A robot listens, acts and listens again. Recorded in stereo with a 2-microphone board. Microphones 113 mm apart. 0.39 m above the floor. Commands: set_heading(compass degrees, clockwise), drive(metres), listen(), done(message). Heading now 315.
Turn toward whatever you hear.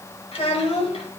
set_heading(255)
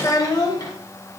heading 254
set_heading(214)
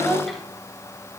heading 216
done("Found it: a child speaking, straight ahead, 1 to 2 m away.")